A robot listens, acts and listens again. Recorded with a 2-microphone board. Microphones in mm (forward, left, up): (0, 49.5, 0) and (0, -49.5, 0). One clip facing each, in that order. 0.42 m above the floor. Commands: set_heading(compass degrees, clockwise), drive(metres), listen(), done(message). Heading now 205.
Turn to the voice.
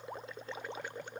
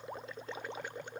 listen()
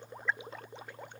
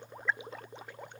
listen()
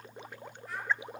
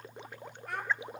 set_heading(270)
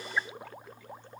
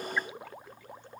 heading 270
listen()
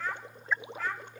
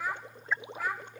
set_heading(280)
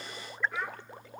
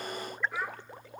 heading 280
done("Found it: a child speaking, straight ahead, 1 to 2 m away.")